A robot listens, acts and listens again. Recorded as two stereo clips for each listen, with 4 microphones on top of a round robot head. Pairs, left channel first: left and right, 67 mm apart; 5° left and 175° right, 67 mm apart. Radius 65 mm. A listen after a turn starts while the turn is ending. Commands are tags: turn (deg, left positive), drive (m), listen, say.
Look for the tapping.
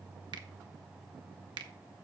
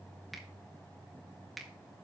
<listen/>
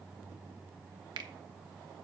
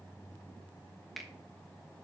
<listen/>
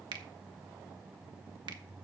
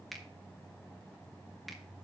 <say>I can't make out tapping to turn to.</say>